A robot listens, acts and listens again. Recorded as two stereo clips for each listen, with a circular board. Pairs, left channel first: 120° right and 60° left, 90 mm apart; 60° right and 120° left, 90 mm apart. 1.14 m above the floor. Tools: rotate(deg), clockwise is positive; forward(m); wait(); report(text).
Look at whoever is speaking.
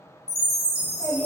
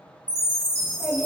rotate(115)
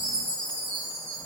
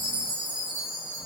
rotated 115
wait()
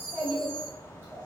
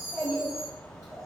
report("Found it: a child speaking, straight ahead.")